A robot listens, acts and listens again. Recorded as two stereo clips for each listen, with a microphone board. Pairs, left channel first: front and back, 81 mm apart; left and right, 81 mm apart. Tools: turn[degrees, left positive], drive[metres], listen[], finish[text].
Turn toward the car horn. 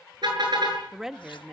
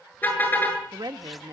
Thought: The car horn: 155° left.
Action: turn[155]
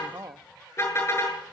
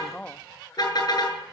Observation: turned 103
Thought: The car horn is now 55° left.
Action: turn[55]
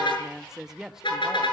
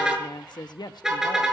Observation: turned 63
Thought: The car horn is now 10° right.
Action: turn[-10]
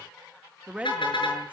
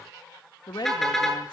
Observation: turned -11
Action: finish[Facing the car horn, over 4 m away.]